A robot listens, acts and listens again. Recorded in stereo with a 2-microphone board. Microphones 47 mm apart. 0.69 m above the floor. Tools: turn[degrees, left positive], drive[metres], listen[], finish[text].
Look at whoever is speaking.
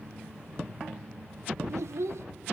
Action: turn[-90]
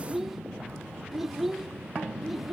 Action: finish[Facing the child speaking.]